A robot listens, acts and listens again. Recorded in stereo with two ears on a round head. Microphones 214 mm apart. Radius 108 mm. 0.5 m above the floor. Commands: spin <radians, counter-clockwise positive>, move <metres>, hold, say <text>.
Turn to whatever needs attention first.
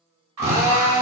spin -1.57
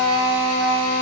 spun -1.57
hold
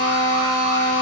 hold
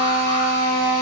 say Facing where the alarm came from. I can't hear it now.